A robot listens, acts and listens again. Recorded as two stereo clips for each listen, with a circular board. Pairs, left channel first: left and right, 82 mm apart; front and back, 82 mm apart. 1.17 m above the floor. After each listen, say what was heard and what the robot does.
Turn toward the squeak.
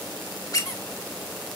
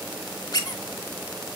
The squeak: 40° left. Turn 40° left.
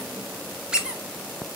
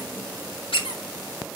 The squeak is now 10° right. Turn 10° right.
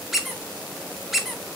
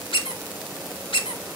Found it: a squeak, straight ahead, 1 to 2 m away.